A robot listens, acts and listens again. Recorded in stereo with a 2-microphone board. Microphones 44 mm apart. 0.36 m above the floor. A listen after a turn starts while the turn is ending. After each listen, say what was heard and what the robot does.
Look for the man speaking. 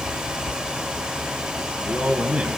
The man speaking: about 30° right or 150° right. Turn 30° right.
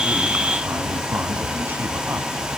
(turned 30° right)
Keep listening.
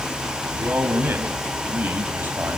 So it is at 125° right. Turn 125° right.
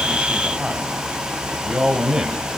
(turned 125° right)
The man speaking is now 15° right. Turn 15° right.
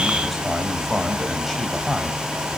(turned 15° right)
Facing the man speaking.